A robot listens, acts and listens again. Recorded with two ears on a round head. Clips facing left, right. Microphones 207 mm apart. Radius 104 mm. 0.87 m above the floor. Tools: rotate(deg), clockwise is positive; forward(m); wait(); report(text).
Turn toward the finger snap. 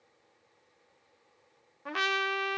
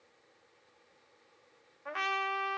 wait()
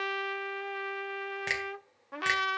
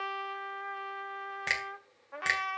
rotate(-30)
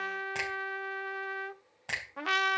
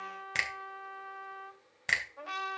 rotate(30)
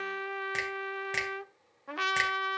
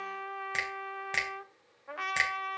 report("Found it: a finger snap, straight ahead, over 4 m away.")